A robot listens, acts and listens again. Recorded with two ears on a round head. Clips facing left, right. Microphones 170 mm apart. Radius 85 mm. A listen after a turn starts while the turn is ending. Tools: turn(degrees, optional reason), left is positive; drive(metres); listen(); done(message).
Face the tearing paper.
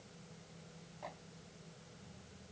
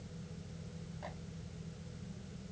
listen()
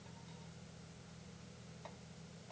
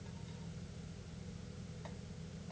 listen()
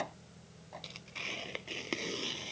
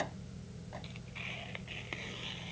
turn(degrees=55, reason="The tearing paper: about 55° left or 125° left.")
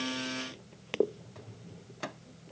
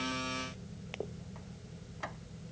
turn(degrees=70, reason="So it is at 70° left.")
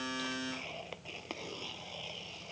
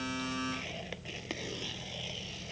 turn(degrees=-15, reason="The tearing paper is now 15° right.")
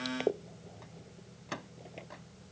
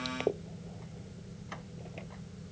done("Found it: tearing paper, straight ahead.")